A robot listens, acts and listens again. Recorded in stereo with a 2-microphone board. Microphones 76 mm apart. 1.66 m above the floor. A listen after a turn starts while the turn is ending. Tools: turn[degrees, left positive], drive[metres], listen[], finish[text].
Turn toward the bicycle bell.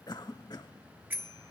Thought: The bicycle bell: about 25° right or 155° right.
Action: turn[-25]
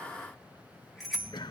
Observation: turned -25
Action: finish[Facing the bicycle bell, 2 to 4 m away.]